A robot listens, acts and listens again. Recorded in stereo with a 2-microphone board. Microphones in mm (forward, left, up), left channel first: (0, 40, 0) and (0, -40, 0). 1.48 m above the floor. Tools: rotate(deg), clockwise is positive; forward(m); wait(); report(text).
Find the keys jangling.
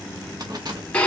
rotate(55)
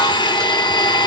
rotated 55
wait()
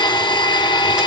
wait()
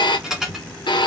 report("Facing the keys jangling.")